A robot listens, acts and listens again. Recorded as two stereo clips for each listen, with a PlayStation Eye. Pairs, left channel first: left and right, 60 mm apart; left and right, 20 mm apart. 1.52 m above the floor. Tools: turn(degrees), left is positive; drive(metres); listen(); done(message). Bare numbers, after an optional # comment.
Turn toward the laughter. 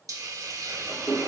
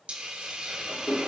# The laughter: about 15° left or 165° left.
turn(15)
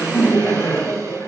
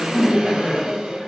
# So it is at 130° left.
turn(130)
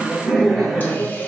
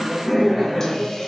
done("Found it: laughter, straight ahead.")